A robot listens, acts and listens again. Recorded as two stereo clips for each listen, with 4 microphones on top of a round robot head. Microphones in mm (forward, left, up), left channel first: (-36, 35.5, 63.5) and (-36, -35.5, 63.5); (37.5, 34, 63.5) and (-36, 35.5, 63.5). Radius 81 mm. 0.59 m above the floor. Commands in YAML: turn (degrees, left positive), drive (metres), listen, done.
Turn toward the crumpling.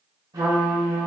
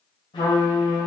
listen: true
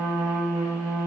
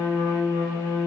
listen: true
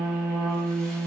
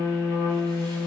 done: "I can't make out crumpling, only a trumpet."